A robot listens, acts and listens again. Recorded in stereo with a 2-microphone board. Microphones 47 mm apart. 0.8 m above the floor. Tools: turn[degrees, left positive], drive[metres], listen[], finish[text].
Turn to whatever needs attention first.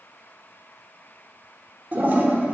Action: listen[]
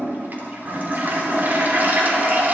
Action: listen[]
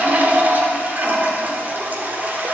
Action: finish[I can't make out anything urgent, only a toilet flushing.]